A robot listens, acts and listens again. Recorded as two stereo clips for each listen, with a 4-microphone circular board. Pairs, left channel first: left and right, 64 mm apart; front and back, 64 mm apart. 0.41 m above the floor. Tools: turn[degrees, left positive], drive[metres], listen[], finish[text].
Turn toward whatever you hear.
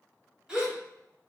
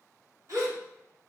Thought: The gasp: 165° right.
Action: turn[-165]
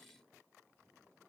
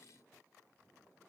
Action: finish[Facing where the gasp came from. I can't hear it now.]